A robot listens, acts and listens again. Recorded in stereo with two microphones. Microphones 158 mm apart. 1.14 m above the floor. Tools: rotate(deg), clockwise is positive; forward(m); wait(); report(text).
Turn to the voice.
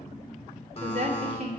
rotate(90)
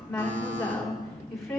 report("Facing the woman speaking.")